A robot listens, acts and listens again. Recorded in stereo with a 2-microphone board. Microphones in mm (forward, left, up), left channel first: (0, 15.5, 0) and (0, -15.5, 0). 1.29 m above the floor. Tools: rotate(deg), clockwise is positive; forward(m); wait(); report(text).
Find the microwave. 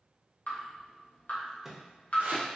rotate(30)
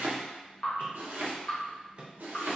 rotate(145)
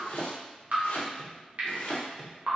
report("Facing the microwave, under 1 m away.")